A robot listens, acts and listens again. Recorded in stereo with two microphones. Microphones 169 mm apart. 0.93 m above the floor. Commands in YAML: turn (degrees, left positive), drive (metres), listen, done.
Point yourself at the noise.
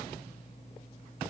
listen: true
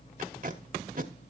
turn: -55
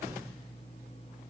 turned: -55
listen: true
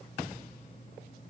listen: true
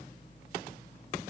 done: "I heard tape being pulled, but can't make it out now. It was about straight ahead or 70° right."